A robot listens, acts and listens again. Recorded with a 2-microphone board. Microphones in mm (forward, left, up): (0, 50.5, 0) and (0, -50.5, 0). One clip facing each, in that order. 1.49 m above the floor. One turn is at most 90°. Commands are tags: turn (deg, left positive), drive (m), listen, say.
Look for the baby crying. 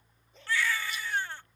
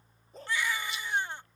<turn deg="-20"/>
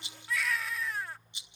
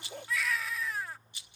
<say>Facing the baby crying.</say>